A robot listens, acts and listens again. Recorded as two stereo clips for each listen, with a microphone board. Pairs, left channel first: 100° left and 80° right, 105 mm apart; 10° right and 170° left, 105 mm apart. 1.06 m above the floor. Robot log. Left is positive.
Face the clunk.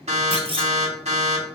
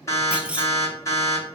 note: The clunk: 110° right.
cmd yaw -110
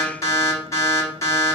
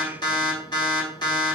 end: I heard a clunk from this way, but can't make it out now.